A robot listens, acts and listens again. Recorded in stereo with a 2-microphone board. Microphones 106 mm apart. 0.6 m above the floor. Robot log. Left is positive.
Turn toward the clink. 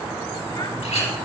cmd yaw +90
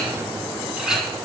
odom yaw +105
end: Found it: a clink, straight ahead, 2 to 4 m away.